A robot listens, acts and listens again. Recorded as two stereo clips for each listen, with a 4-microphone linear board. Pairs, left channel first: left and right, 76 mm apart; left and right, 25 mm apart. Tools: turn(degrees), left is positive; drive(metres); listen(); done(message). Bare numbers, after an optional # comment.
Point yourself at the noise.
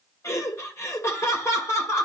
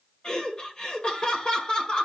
# The laughter: about 35° left or 145° left.
turn(35)
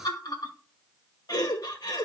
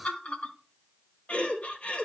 # So it is at 105° left.
turn(105)
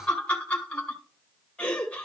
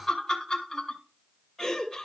# The laughter is now 20° left.
turn(20)
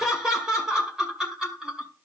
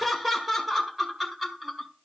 done("Facing the laughter, 2 to 4 m away.")